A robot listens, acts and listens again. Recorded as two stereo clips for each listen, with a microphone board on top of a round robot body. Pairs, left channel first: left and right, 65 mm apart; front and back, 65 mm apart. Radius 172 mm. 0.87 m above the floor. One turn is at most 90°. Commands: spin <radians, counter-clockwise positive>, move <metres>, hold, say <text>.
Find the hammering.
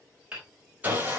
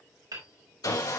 spin -1.57
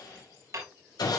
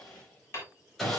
spin -0.96
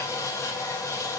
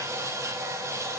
hold
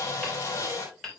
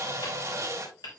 say Facing the hammering.